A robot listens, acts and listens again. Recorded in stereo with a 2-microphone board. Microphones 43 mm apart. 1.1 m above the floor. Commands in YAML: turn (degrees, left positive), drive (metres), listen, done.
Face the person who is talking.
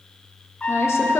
turn: 90
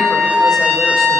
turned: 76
turn: 15
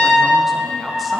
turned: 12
listen: true
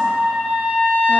done: "Facing where the woman speaking came from. I can't hear it now."